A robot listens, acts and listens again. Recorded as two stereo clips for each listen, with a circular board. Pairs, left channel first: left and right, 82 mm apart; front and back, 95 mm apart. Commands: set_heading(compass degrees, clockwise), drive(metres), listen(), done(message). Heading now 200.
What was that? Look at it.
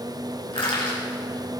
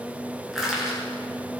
set_heading(105)
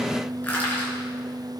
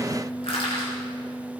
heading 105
set_heading(85)
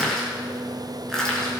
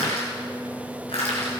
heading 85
done("Facing the crushing.")